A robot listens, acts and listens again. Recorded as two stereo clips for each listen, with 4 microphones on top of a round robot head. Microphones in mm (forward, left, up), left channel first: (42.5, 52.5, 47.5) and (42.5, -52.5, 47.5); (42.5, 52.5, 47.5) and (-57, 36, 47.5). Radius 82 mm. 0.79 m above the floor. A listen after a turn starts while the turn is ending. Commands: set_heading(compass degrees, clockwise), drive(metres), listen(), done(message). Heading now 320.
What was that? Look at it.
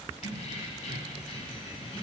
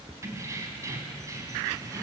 set_heading(190)
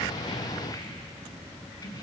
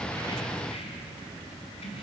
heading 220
set_heading(185)
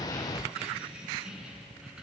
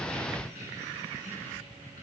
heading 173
done("Found it: keys jangling, straight ahead.")